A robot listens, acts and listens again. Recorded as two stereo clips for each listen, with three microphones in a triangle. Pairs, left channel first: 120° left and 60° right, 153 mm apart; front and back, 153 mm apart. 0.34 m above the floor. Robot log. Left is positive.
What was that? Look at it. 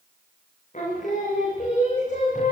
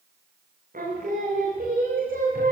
note: The singing: 160° left.
cmd yaw +160
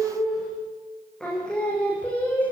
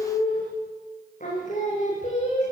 note: The singing is now 40° left.
cmd yaw +40
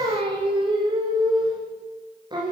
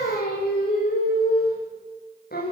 end: Found it: singing, straight ahead, over 4 m away.